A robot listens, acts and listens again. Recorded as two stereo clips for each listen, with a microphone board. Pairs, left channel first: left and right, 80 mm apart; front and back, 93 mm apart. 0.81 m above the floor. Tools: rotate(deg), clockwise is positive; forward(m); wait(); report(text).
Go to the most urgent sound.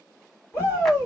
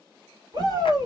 rotate(-145)
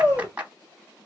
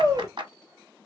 rotate(25)
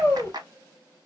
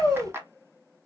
rotate(-20)
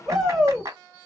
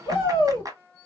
forward(1.0)
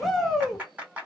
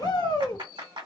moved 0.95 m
forward(1.0)
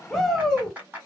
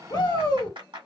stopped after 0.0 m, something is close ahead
report("I am next to the shout.")